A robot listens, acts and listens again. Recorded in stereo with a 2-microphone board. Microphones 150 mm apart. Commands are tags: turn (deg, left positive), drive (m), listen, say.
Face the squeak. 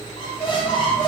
<turn deg="35"/>
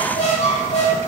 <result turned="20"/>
<turn deg="120"/>
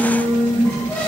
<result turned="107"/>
<turn deg="15"/>
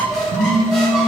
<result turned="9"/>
<say>Facing the squeak.</say>